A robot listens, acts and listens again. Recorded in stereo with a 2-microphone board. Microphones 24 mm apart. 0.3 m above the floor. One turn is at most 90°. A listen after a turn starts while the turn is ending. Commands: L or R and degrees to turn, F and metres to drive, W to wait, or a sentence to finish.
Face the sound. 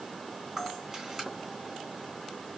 R20
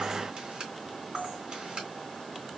R90
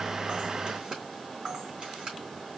R45
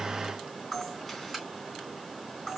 Found it: a camera shutter, straight ahead.